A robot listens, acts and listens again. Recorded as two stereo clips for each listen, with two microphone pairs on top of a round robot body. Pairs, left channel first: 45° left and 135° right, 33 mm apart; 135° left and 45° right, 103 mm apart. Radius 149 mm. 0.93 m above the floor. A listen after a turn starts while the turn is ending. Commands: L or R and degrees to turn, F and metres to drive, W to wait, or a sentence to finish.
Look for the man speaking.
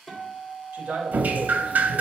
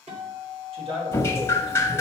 R75
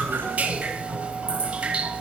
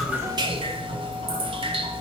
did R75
W
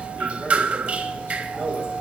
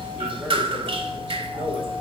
L35
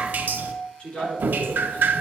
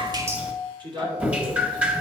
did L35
Found it: a man speaking, straight ahead, 2 to 4 m away.